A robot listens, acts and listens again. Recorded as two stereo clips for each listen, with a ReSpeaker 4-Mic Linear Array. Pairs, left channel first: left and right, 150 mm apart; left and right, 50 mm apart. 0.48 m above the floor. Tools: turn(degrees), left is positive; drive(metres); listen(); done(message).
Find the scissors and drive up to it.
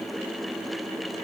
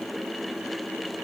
listen()
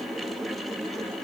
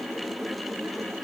listen()
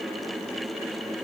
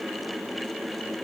done("I can't make out scissors.")